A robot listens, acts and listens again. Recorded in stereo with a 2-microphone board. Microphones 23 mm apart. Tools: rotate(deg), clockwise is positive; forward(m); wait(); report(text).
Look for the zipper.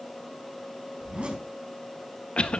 rotate(50)
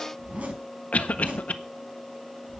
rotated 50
rotate(75)
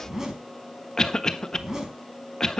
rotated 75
rotate(25)
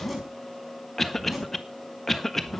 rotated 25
report("Facing the zipper, over 4 m away.")